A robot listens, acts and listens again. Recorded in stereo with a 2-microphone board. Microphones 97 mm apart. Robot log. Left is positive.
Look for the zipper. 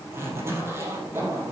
note: The zipper: about 25° right or 155° right.
cmd yaw -25
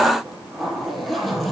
end: Found it: a zipper, straight ahead, 2 to 4 m away.